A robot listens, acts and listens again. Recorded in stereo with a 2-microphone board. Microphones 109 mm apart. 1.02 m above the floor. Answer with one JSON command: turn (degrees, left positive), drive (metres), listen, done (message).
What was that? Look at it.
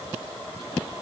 {"listen": true}
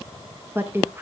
{"turn": -20}
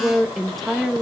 {"done": "Facing the woman speaking."}